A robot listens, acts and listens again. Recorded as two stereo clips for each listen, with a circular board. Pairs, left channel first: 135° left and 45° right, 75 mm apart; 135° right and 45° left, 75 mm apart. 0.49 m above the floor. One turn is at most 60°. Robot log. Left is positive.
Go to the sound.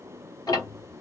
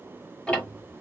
note: The ticking: 150° left.
cmd yaw +60
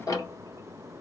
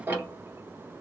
note: The ticking is now 105° left.
cmd yaw +60
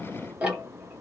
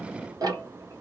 note: The ticking is now 30° left.
cmd yaw +30
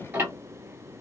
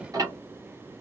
note: The ticking is now 15° left.
cmd yaw +15
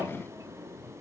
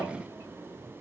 cmd idle
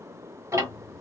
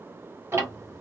cmd fwd 1.0
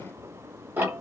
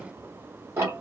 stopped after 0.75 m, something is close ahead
end: Arrived at the ticking, straight ahead.